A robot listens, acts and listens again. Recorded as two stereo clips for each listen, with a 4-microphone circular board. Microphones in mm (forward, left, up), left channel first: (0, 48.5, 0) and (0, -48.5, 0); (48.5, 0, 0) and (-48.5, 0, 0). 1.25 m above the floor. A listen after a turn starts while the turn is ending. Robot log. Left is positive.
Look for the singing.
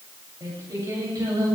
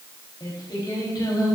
note: The singing: 45° right.
cmd yaw -45
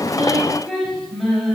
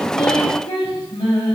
end: Found it: singing, straight ahead.